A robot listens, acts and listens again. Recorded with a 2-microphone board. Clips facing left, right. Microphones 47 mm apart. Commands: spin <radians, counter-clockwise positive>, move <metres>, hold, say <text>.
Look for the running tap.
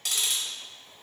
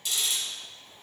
hold
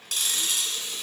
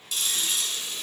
spin -0.44
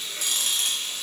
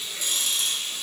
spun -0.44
say Facing the running tap, 1 to 2 m away.